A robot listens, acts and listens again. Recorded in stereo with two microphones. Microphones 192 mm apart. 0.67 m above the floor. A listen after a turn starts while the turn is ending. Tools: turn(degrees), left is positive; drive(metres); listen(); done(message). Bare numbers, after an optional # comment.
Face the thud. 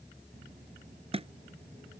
# The thud: about 30° right or 150° right.
turn(-30)
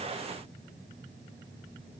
listen()
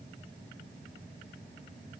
done("I heard a thud, but can't make it out now. It was about straight ahead or 120° right.")